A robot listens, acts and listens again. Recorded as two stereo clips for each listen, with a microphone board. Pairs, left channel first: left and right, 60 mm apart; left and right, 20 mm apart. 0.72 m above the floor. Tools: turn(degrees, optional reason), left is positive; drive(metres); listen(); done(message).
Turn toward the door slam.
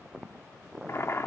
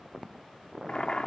listen()
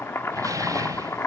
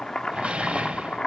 turn(degrees=-90)
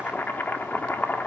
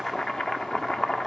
done("I heard a door slam from this way, but can't make it out now.")